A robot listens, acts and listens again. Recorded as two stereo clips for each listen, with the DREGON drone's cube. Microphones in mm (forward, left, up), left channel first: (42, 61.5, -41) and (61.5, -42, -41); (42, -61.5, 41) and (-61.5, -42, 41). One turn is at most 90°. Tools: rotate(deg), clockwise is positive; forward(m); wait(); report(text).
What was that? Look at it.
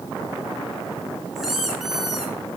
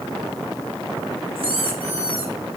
rotate(90)
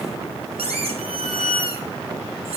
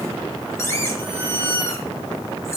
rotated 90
rotate(75)
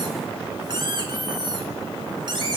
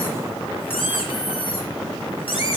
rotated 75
rotate(35)
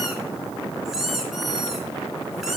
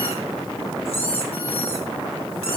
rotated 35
report("Facing the squeak.")